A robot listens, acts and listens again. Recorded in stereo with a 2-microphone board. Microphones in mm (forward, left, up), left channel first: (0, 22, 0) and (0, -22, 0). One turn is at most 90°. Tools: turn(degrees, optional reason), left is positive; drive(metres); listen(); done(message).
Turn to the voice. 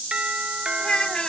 turn(degrees=20, reason="The child speaking: about 20° left or 160° left.")
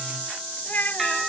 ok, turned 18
turn(degrees=90, reason="So it is at 130° left.")
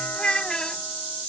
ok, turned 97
turn(degrees=20, reason="The child speaking is now 20° left.")
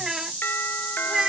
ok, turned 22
turn(degrees=-15, reason="The child speaking is now 15° right.")
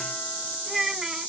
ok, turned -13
turn(degrees=-10, reason="The child speaking is now 10° right.")
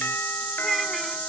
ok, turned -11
listen()
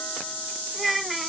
done("Found it: a child speaking, straight ahead.")